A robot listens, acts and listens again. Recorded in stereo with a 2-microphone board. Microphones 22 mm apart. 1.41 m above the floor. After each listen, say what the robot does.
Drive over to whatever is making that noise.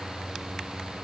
Keep listening.
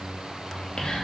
Turn 55° left.
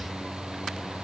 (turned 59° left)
Keep listening.
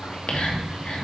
Turn 70° left.
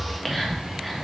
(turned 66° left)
Drive 1.0 m forward.
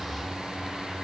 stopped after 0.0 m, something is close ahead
Keep listening.
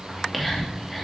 Blocked. The whispering is further on, straight ahead.